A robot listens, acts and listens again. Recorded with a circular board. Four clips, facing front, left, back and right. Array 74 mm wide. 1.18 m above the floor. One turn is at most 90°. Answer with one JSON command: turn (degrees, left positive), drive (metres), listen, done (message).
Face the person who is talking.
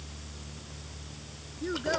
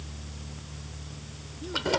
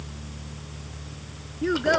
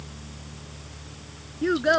{"turn": -90}
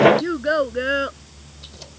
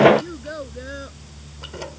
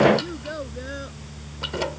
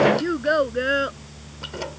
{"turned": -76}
{"turn": -45}
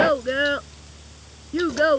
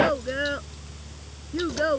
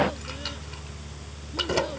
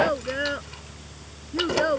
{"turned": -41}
{"done": "Facing the child speaking."}